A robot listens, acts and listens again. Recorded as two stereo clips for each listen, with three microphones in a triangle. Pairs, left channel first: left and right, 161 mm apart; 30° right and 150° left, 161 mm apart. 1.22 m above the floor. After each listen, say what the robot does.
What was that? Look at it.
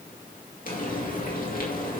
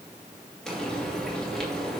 Turn 55° left.
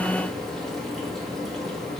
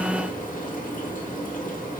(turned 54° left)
Facing the frying.